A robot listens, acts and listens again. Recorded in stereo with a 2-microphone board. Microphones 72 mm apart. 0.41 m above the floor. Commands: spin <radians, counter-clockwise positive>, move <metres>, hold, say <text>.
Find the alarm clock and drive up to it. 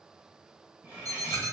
spin -1.05
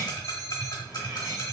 hold
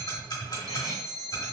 spin -1.05
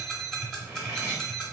spin 0.17
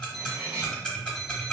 move 1.0
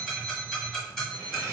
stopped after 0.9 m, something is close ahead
say Arrived at the alarm clock, straight ahead.